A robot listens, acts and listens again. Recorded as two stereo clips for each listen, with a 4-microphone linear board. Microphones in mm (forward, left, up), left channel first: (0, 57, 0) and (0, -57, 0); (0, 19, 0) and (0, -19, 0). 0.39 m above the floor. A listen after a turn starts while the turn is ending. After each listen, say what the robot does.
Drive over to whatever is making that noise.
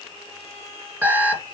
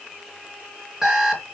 Turn 30° right.
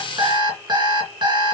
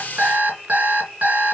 Turn 140° right.
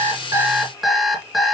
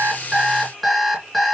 Drive 1.0 m forward.
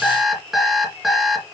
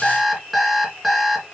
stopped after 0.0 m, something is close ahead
Something is in my way. I am facing the alarm clock but have not reached it.